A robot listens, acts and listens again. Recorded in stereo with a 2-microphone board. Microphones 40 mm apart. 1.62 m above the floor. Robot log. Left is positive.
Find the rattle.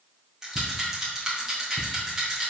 cmd yaw -30
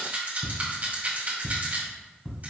note: So it is at 135° right.
cmd yaw -135
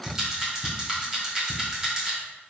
note: The rattle is now 15° right.
cmd yaw -15
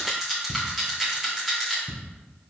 end: Facing the rattle.